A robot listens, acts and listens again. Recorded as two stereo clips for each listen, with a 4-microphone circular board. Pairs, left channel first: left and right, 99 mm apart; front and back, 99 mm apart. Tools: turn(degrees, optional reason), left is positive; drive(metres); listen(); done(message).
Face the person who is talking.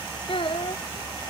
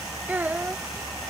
turn(degrees=110, reason="The child speaking: 110° left.")
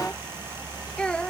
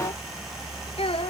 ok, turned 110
turn(degrees=10, reason="The child speaking is now 10° left.")
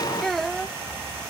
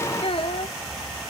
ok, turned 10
done("Facing the child speaking.")